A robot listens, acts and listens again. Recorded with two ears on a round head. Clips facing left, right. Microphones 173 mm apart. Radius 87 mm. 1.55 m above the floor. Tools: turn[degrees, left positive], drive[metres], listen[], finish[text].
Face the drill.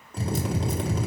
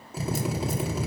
Action: turn[-30]
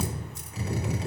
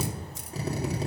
Thought: So it is at 145° right.
Action: turn[-145]
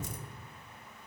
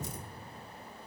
Action: listen[]
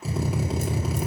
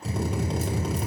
Action: finish[Found it: a drill, straight ahead, 2 to 4 m away.]